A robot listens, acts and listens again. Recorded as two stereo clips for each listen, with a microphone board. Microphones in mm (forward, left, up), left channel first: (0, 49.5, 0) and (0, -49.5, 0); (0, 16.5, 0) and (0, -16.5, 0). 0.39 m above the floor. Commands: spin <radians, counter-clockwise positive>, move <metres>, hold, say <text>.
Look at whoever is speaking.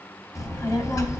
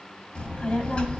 spin 0.61
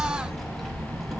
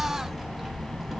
say Found it: a child speaking, straight ahead.